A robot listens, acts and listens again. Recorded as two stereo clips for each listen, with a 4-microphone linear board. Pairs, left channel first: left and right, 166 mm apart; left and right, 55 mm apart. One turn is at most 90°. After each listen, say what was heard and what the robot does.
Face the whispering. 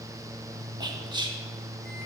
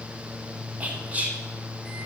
The whispering: about 25° right or 155° right. Turn 25° right.
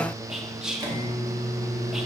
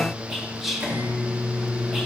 Found it: whispering, straight ahead.